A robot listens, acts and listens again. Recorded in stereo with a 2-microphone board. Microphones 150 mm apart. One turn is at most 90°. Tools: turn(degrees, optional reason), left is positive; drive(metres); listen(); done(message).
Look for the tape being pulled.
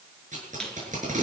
turn(degrees=-60, reason="The tape being pulled: about 60° right or 120° right.")
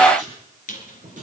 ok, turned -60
turn(degrees=-60, reason="So it is at 60° right.")
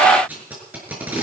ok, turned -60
turn(degrees=-10, reason="The tape being pulled is now 10° right.")
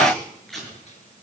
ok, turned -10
done("Found it: tape being pulled, straight ahead.")